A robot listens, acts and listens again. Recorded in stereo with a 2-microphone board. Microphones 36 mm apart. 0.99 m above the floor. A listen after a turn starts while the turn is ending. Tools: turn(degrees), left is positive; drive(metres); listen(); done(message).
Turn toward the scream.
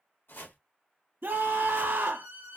turn(degrees=-70)
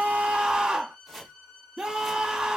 turn(degrees=-20)
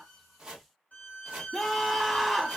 done("Found it: a scream, straight ahead, 1 to 2 m away.")